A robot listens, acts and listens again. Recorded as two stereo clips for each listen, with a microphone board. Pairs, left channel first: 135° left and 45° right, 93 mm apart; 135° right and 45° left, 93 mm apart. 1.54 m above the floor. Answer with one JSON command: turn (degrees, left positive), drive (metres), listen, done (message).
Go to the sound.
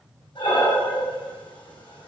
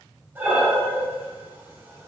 {"turn": 115}
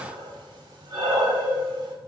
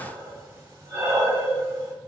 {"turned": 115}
{"turn": -10}
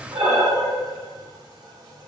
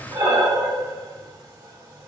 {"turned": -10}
{"drive": 1.0}
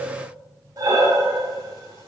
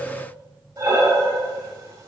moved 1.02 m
{"drive": 1.0}
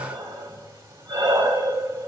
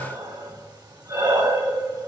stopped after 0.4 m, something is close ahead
{"turn": 10}
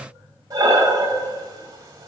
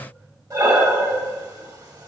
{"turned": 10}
{"done": "I am next to the breathing."}